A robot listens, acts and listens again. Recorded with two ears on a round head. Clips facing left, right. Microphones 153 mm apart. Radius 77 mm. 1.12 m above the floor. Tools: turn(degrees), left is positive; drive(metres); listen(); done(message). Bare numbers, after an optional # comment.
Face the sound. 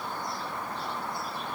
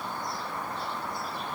listen()
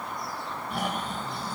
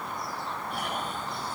# The snoring: about 70° left or 110° left.
turn(70)
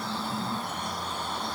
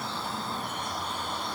# So it is at 40° left.
turn(40)
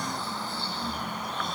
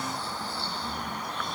# The snoring is now 25° left.
turn(25)
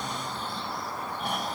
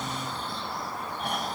done("Facing the snoring.")